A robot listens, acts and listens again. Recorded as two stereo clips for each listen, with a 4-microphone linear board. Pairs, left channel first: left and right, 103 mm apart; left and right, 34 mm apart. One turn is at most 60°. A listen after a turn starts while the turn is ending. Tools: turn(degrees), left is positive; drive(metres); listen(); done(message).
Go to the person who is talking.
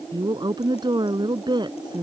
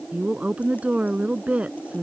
turn(degrees=-45)
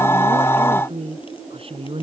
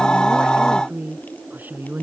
turn(degrees=-60)
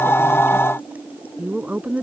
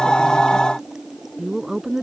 turn(degrees=-15)
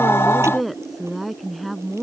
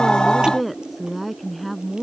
drive(metres=1.0)
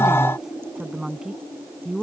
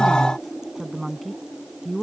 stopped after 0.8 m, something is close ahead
done("Something is in my way. I am facing the woman speaking but have not reached it.")